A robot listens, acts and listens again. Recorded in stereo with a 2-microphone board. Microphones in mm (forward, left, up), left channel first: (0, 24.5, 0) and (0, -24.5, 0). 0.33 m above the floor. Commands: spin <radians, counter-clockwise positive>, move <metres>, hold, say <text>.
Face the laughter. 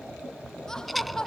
spin 0.52
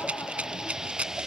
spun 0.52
hold
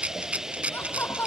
spin 2.36
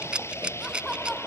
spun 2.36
hold
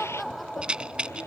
say Facing the laughter.